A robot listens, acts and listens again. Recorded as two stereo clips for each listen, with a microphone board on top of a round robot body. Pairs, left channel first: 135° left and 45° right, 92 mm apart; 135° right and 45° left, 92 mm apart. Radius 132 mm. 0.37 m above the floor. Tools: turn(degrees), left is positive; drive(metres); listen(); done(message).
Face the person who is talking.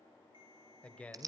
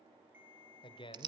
turn(degrees=-150)
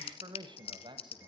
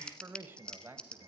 turn(degrees=-20)
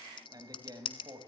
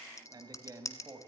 done("Facing the man speaking.")